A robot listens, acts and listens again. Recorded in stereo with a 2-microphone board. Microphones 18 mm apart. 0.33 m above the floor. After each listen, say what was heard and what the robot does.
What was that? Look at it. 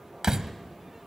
The door slam: about 40° right or 140° right. Turn 40° right.
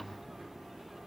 Keep listening.
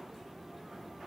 I heard a door slam, but can't make it out now. It was about straight ahead or 100° right.